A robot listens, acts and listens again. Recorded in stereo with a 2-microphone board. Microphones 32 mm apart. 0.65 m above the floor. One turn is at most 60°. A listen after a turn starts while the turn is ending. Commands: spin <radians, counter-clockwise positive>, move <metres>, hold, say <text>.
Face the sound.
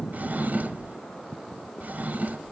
spin -0.96
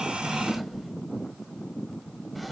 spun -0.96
say Found it: a drawer, straight ahead, 1 to 2 m away.